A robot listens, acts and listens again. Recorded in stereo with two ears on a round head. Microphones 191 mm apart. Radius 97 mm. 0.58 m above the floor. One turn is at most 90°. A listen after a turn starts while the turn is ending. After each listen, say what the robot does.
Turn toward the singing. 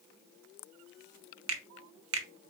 Keep listening.
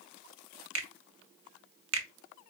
Keep listening.
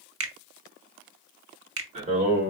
Turn 35° right.
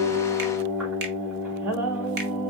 Found it: singing, straight ahead.